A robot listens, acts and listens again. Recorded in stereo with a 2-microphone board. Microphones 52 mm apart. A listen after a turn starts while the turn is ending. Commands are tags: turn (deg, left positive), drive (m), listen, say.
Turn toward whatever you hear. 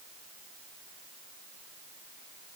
<listen/>
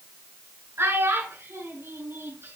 <turn deg="-60"/>
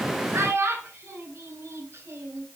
<turn deg="-60"/>
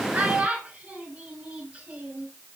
<turn deg="-20"/>
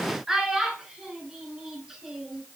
<say>Found it: a child speaking, straight ahead.</say>